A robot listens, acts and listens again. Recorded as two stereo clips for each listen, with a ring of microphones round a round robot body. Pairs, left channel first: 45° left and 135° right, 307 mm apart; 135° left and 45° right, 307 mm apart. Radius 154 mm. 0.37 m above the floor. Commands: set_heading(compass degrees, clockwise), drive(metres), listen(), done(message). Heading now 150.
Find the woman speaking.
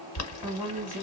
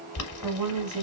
set_heading(205)
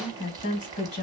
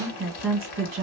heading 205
done("Facing the woman speaking.")